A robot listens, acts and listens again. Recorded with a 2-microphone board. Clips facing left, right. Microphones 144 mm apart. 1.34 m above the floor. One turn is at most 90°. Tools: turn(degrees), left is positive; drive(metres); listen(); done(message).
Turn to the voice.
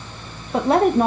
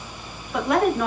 turn(degrees=35)
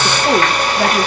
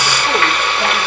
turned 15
listen()
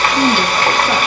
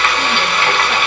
listen()
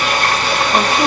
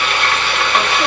done("I heard a woman speaking, but can't make it out now. It was about 20° left or 130° left.")